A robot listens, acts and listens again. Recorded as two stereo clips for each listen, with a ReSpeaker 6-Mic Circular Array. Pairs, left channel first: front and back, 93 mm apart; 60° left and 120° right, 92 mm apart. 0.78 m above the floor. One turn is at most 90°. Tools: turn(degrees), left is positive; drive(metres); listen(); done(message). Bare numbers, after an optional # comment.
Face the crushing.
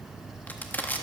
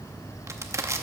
# The crushing: 65° right.
turn(-65)
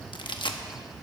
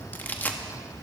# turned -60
done("Found it: crushing, straight ahead, under 1 m away.")